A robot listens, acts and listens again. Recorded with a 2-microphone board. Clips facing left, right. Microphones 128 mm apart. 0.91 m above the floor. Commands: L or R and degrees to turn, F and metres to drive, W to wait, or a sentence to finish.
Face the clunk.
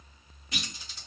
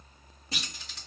R35
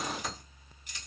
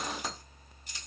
W
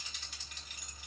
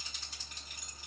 I heard a clunk, but can't make it out now. It was about straight ahead or 110° right.